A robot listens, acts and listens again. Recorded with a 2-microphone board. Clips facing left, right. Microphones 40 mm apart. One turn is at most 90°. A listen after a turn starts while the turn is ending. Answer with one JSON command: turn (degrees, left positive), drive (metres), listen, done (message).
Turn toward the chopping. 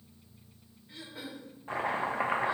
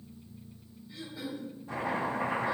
{"turn": 45}
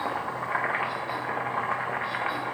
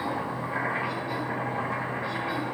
{"turn": 80}
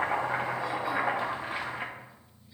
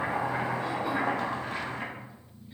{"turn": 20}
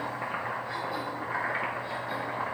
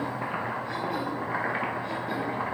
{"done": "Facing the chopping."}